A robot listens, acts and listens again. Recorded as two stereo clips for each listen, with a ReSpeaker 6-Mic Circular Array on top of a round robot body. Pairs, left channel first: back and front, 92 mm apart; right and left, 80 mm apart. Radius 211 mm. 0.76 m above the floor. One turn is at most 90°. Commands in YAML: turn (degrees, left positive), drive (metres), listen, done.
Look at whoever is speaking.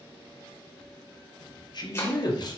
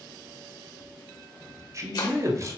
turn: 90
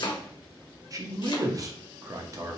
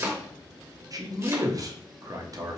turn: 50
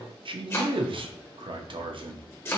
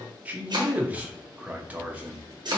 turn: 20
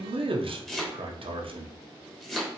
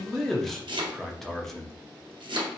done: "Facing the man speaking."